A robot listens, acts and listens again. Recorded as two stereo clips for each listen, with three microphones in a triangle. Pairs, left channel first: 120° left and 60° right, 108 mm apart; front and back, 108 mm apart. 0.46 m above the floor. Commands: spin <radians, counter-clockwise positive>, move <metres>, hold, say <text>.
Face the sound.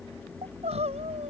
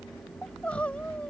spin -1.40
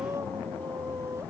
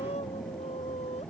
say Facing the crying.